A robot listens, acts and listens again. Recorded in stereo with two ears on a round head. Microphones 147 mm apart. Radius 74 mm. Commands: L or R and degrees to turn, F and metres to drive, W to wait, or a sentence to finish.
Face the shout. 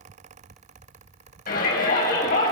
L60
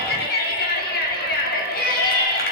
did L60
L60
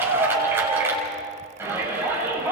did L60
R15
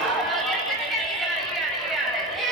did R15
Found it: a shout, straight ahead.